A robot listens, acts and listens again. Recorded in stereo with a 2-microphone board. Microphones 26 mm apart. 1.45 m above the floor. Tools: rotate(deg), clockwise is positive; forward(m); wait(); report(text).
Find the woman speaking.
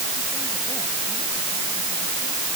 wait()
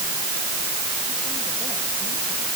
wait()
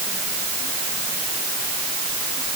report("I can't make out a woman speaking.")